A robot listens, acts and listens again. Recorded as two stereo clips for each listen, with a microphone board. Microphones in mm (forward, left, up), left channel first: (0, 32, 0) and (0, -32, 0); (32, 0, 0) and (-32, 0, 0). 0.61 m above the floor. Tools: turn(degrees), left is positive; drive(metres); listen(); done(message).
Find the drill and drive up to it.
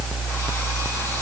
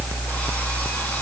listen()
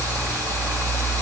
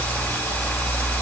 listen()
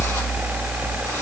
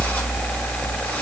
done("I can't make out a drill to turn to.")